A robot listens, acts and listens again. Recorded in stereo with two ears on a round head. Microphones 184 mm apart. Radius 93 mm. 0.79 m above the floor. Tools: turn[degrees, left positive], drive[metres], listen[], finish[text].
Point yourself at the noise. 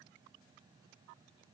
Action: listen[]
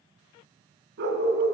Thought: The dog barking: about 55° right or 125° right.
Action: turn[-55]
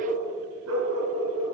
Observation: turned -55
Thought: So it is at 75° right.
Action: turn[-75]
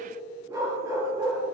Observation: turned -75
Thought: The dog barking is now 15° right.
Action: turn[-15]
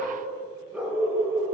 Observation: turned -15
Action: finish[Found it: a dog barking, straight ahead.]